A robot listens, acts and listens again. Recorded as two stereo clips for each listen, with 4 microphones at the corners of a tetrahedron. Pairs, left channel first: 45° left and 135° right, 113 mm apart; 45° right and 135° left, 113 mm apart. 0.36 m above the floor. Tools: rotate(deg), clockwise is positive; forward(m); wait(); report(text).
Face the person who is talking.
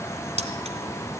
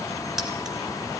wait()
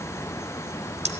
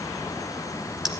wait()
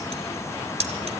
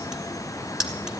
report("I can't make out anyone speaking.")